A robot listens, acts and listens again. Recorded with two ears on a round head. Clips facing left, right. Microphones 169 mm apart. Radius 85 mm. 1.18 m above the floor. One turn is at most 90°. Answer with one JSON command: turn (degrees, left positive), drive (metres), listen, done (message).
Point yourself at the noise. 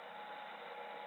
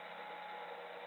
{"listen": true}
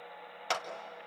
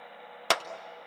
{"turn": -65}
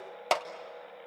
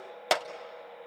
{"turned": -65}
{"turn": -10}
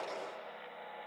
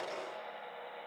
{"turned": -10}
{"listen": true}
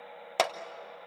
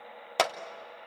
{"done": "Facing the clap, under 1 m away."}